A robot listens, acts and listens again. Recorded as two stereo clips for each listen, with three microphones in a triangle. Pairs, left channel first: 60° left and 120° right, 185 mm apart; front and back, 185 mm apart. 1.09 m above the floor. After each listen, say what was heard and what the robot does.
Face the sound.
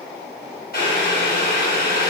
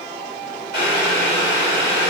The boiling: 25° left. Turn 25° left.
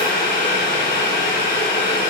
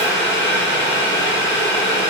The boiling is now 20° left. Turn 20° left.
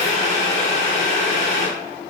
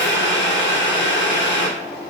Facing the boiling.